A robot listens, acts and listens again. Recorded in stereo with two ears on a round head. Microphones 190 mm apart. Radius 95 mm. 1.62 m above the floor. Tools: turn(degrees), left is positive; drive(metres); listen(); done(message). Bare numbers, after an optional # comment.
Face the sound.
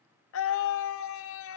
# The scream: about 70° left or 110° left.
turn(70)
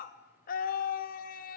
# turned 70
# So it is at 40° left.
turn(40)
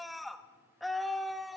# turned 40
done("Found it: a scream, straight ahead, under 1 m away.")